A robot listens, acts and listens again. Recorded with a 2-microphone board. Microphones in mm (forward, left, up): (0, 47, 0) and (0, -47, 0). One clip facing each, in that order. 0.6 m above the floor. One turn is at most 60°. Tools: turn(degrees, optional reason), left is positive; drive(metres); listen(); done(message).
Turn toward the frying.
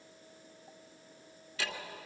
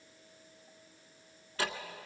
listen()
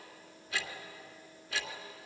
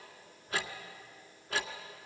listen()
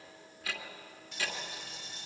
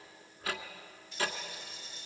turn(degrees=60, reason="The frying: about 65° left or 115° left.")
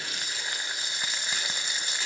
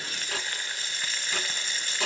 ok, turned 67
turn(degrees=20, reason="So it is at 20° left.")
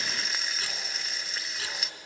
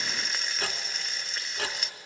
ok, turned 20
done("Found it: frying, straight ahead.")